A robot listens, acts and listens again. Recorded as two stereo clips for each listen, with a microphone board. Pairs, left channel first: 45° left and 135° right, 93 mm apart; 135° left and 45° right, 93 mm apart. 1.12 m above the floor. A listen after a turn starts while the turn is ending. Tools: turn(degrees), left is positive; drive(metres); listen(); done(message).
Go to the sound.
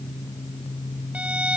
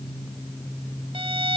turn(degrees=-60)
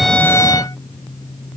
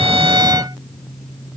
listen()
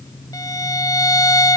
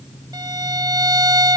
drive(metres=1.0)
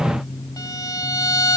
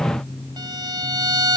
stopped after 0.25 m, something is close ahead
done("Something is in my way. I am facing the violin but have not reached it.")